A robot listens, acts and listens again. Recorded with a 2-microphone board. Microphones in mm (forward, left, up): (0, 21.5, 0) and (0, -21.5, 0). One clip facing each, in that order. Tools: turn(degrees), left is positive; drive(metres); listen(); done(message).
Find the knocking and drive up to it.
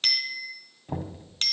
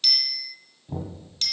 turn(degrees=55)
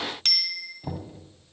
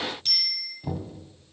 turn(degrees=15)
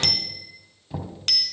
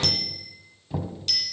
drive(metres=1.0)
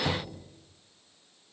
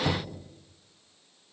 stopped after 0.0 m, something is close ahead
done("Blocked. The knocking is further on, straight ahead.")